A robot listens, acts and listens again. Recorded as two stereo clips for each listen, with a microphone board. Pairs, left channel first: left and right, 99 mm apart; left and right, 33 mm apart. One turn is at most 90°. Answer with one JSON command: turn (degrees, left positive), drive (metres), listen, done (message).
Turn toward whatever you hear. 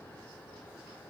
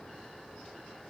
{"listen": true}
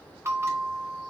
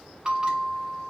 {"turn": -30}
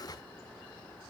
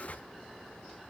{"listen": true}
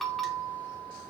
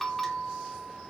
{"done": "Found it: a bell, straight ahead, 2 to 4 m away."}